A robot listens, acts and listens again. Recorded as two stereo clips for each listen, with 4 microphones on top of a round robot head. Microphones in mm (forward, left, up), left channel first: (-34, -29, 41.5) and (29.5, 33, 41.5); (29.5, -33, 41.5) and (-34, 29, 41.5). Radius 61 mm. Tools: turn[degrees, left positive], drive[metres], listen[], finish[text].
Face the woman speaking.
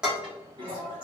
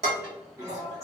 Action: listen[]
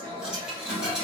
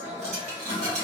Action: listen[]
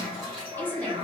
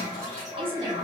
Thought: The woman speaking: 150° left.
Action: turn[150]
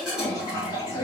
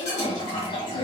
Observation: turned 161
Thought: The woman speaking is now 65° right.
Action: turn[-65]
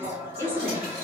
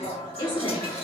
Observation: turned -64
Thought: The woman speaking is now 20° right.
Action: turn[-20]
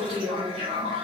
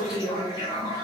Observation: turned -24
Action: finish[Found it: a woman speaking, straight ahead, 1 to 2 m away.]